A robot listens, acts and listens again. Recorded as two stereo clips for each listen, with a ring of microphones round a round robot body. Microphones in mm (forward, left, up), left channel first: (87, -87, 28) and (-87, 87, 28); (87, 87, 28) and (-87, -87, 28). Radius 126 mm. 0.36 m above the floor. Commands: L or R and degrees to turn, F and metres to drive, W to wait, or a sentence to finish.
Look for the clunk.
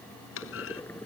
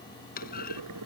R10
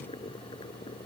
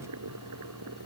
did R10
Facing where the clunk came from. I can't hear it now.